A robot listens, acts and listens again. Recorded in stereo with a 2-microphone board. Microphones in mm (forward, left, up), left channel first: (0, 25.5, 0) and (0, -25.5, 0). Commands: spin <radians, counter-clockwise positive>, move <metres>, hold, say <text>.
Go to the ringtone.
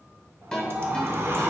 spin 0.52
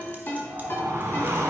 spin 2.36
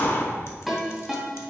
move 1.0
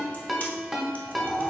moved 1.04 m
move 1.0
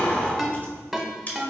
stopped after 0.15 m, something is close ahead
say I am next to the ringtone.